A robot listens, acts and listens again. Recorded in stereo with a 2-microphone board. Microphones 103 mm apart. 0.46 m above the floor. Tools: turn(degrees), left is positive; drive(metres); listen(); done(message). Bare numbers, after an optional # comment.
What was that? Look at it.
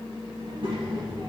# The child speaking: about 60° right or 120° right.
turn(-60)
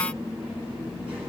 listen()
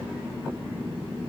# So it is at 20° right.
turn(-20)
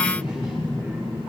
# The child speaking is now 10° right.
turn(-10)
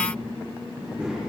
done("Found it: a child speaking, straight ahead, over 4 m away.")